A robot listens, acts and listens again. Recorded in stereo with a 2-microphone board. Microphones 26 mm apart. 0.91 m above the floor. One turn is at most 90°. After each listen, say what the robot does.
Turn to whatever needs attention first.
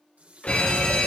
Turn 60° left.
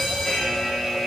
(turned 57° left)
Turn 10° left.
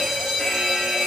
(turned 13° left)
Facing the fire alarm, over 4 m away.